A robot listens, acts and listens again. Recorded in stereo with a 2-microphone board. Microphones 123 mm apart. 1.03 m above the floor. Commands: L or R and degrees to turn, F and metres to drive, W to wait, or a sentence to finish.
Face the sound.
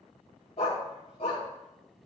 L50
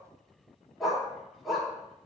Facing the dog barking, 2 to 4 m away.